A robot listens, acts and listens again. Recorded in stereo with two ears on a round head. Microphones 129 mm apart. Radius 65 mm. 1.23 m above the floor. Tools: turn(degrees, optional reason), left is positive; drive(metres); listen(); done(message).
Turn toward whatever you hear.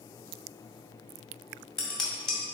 turn(degrees=30)
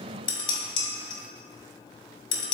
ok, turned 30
turn(degrees=145, reason="So it is at 145° left.")
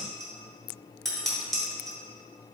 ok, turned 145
done("Facing the dishes clattering.")